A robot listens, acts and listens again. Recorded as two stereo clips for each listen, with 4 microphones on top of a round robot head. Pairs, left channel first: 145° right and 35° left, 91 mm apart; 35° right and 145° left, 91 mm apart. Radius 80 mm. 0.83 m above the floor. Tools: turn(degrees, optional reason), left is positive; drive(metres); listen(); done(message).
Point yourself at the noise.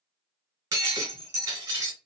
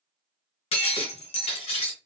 turn(degrees=-25, reason="The breaking glass: 25° right.")
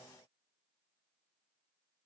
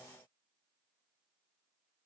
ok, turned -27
done("I heard breaking glass from this way, but can't make it out now.")